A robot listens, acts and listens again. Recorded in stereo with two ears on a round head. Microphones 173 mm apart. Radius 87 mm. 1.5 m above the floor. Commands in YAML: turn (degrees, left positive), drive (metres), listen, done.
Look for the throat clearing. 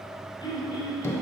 turn: 25
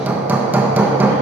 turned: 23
listen: true
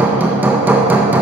listen: true
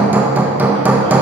done: "I heard throat clearing, but can't make it out now. It was about straight ahead or 135° left."